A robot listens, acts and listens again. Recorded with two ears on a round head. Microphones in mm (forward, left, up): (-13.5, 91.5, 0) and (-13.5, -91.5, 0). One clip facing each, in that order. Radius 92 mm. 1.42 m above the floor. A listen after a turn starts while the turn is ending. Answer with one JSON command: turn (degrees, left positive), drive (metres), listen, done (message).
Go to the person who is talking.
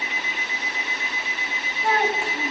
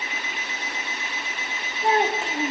{"turn": -20}
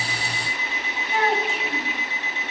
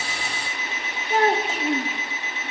{"turn": -145}
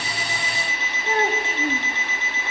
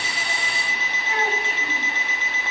{"turn": 35}
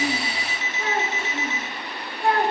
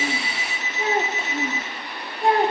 {"turn": -20}
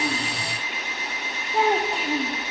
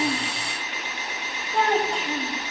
{"drive": 1.0}
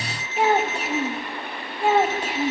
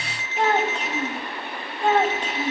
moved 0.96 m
{"turn": 10}
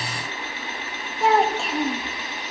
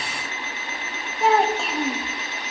{"drive": 1.0}
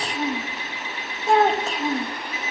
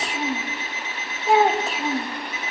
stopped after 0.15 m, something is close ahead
{"done": "Arrived at the child speaking, straight ahead."}